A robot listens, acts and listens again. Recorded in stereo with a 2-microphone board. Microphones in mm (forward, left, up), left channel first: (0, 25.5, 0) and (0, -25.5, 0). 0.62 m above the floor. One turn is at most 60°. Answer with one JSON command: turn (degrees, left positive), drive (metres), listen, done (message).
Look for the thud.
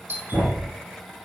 {"turn": -45}
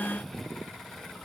{"listen": true}
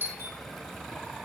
{"done": "I heard a thud, but can't make it out now. It was about straight ahead or 90° right."}